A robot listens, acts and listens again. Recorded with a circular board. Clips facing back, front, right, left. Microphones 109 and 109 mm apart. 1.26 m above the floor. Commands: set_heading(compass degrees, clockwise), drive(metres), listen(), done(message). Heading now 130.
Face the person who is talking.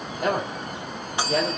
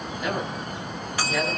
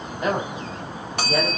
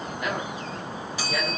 set_heading(275)
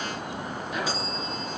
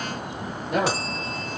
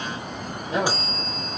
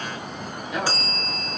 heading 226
set_heading(261)
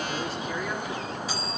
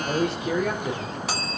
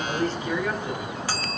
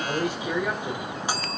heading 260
set_heading(250)
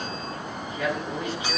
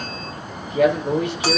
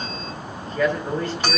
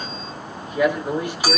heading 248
set_heading(233)
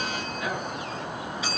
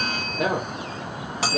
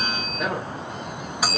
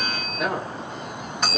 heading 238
done("Facing the man speaking.")